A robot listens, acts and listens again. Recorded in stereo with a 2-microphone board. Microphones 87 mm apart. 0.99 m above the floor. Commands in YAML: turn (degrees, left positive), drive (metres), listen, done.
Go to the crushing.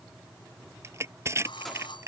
turn: -30
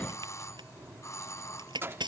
turn: -120
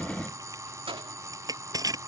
turn: -45
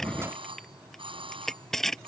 drive: 1.0
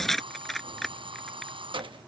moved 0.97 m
drive: 1.0
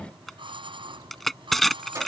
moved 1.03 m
drive: 1.0
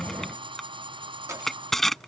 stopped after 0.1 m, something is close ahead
done: "I am next to the crushing."